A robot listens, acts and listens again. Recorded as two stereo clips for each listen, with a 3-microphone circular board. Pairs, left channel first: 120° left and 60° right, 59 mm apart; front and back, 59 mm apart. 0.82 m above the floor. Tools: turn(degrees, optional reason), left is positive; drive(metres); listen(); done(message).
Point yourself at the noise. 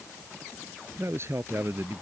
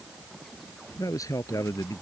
turn(degrees=-15, reason="The man speaking: 15° right.")
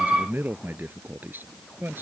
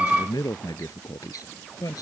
done("Facing the man speaking.")